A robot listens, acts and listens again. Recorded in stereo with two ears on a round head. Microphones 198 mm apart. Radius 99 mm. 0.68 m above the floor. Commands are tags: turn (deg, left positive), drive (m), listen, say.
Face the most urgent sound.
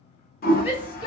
<turn deg="-30"/>
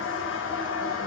<listen/>
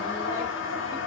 <listen/>
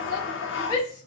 <turn deg="20"/>
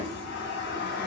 <listen/>
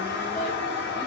<listen/>
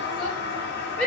<say>Facing the shout.</say>